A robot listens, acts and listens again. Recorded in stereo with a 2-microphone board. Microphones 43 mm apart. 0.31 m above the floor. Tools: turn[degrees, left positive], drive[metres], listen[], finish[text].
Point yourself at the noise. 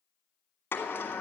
Thought: The sliding door: about 60° left or 120° left.
Action: turn[60]
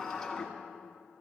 Action: finish[Found it: a sliding door, straight ahead.]